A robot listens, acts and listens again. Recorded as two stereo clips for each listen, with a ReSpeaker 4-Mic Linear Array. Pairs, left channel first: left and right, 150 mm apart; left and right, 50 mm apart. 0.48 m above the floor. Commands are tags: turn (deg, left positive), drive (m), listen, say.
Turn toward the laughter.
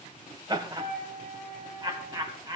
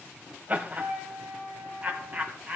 <turn deg="-25"/>
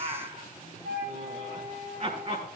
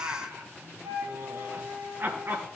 <turn deg="-130"/>
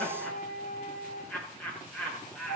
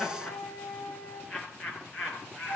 <turn deg="10"/>
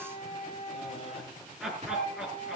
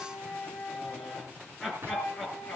<say>Found it: laughter, straight ahead, over 4 m away.</say>